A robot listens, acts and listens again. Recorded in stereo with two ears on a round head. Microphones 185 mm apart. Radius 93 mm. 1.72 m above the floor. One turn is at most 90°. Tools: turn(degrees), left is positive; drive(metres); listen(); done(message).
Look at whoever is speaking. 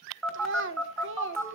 turn(degrees=-65)
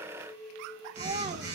listen()
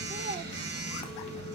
listen()
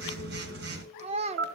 turn(degrees=-35)
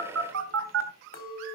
listen()
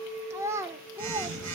turn(degrees=-15)
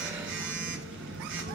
listen()
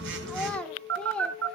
done("Found it: a child speaking, straight ahead, 1 to 2 m away.")